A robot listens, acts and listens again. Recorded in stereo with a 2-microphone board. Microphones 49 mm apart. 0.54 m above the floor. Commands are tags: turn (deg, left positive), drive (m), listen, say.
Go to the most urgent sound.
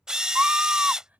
<turn deg="-35"/>
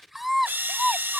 <drive m="1.0"/>
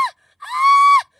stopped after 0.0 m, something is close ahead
<say>Blocked. The scream is further on, straight ahead.</say>